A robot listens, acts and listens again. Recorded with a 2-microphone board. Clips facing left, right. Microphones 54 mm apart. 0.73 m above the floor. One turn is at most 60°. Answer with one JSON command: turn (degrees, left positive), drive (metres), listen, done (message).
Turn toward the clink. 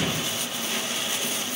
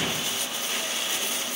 {"listen": true}
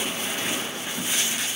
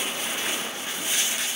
{"listen": true}
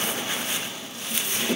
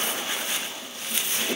{"done": "I can't make out a clink to turn to."}